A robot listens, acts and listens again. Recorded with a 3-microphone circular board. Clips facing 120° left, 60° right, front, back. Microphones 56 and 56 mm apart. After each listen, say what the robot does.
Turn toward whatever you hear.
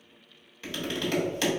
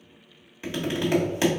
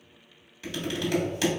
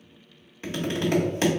Turn 125° right.
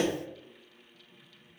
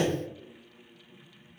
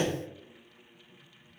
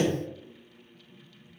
Turn 15° left.
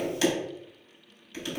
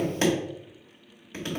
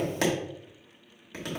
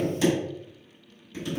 Found it: tapping, straight ahead, 1 to 2 m away.